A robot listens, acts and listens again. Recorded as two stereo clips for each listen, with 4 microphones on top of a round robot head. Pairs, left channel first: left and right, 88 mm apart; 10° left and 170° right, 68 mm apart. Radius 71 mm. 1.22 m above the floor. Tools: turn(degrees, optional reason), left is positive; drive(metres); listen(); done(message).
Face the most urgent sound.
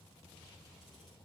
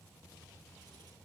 listen()
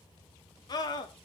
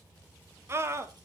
turn(degrees=140, reason="The scream: 140° left.")
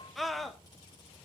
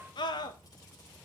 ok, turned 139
done("Facing the scream, 1 to 2 m away.")